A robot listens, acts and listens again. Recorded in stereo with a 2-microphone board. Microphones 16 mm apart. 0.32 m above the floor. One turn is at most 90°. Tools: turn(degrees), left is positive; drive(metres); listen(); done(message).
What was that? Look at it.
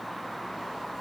listen()
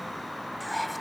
turn(degrees=30)
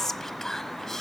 turn(degrees=90)
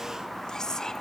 turn(degrees=50)
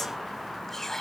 turn(degrees=25)
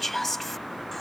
turn(degrees=15)
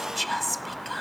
done("Facing the whispering.")